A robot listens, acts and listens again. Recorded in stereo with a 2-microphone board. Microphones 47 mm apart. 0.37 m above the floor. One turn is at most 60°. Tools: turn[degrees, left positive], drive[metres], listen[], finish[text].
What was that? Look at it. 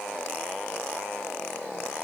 Action: listen[]
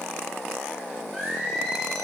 Action: turn[30]
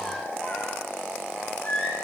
Thought: So it is at 140° left.
Action: turn[60]
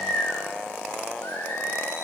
Thought: The singing is now 70° left.
Action: turn[60]
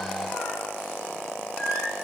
Thought: The singing is now 15° left.
Action: turn[15]
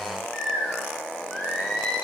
Action: finish[Facing the singing, over 4 m away.]